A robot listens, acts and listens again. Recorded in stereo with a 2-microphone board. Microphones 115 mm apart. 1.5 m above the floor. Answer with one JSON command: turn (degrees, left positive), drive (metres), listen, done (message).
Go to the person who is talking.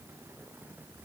{"listen": true}
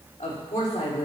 {"turn": 90}
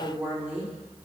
{"turn": -15}
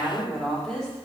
{"drive": 1.0}
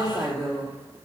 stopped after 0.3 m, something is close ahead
{"done": "Blocked. The woman speaking is further on, straight ahead."}